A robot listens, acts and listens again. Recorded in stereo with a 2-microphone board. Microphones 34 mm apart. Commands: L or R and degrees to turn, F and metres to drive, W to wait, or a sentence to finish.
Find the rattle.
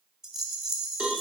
R30
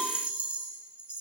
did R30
R140
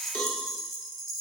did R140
Facing the rattle.